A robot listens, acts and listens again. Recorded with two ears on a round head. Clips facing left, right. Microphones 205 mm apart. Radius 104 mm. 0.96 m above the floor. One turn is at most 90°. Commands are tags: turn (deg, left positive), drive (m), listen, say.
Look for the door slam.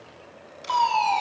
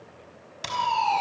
<turn deg="-90"/>
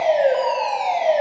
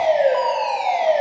<say>I heard a door slam from this way, but can't make it out now.</say>